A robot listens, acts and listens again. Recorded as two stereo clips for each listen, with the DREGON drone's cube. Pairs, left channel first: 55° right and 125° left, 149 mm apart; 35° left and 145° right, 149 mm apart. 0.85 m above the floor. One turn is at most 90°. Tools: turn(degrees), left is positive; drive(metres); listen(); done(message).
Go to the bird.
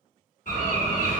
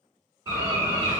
turn(degrees=-80)
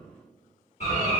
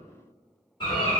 turn(degrees=-20)
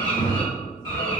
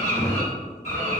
drive(metres=1.0)
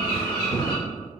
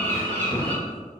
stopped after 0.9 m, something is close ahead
done("I am next to the bird.")